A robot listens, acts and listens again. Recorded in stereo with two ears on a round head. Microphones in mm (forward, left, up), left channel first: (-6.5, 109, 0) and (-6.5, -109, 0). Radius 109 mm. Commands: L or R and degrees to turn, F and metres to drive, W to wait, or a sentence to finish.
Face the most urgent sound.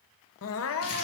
L60
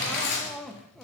Facing the crying.